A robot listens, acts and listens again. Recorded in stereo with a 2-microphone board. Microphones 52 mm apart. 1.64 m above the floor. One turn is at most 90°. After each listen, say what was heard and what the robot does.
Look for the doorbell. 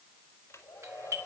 The doorbell: about 60° right or 120° right. Turn 60° right.
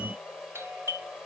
So it is at 55° right. Turn 55° right.
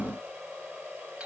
Keep listening.
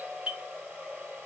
The doorbell is now 20° right. Turn 20° right.
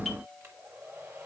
Facing the doorbell, 2 to 4 m away.